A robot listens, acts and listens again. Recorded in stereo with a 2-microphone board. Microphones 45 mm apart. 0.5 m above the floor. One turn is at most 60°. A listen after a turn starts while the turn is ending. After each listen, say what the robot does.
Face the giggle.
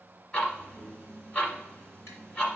Keep listening.
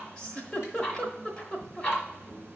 Turn 25° left.
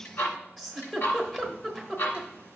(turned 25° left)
Facing the giggle.